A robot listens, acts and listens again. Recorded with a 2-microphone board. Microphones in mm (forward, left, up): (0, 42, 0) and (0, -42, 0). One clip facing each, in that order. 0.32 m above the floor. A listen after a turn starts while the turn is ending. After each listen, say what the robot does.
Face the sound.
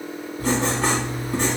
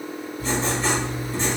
Turn 60° left.
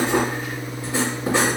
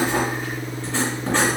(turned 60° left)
Turn 10° left.
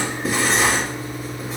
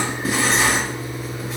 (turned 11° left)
Found it: writing, straight ahead.